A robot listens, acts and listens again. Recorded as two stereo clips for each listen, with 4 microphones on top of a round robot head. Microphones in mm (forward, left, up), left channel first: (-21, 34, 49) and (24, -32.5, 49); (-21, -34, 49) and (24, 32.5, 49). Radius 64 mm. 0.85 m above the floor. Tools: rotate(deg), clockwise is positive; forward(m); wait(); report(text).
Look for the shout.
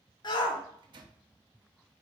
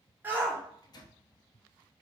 rotate(-120)
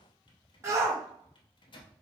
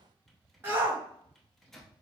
report("Facing the shout, 1 to 2 m away.")